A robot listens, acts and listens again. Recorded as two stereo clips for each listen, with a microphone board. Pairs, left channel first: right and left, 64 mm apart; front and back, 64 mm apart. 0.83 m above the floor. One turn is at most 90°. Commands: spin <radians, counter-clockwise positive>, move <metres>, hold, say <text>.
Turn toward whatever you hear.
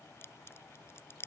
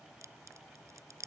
spin -1.57
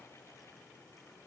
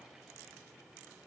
spin -0.87
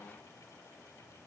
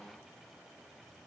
say Facing where the crack came from. I can't hear it now.